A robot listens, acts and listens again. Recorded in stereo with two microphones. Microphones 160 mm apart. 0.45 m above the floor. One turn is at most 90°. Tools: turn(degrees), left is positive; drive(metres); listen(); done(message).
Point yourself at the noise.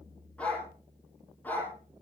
turn(degrees=30)
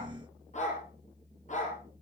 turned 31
turn(degrees=90)
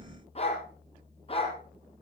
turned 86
turn(degrees=35)
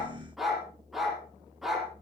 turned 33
done("Facing the dog barking.")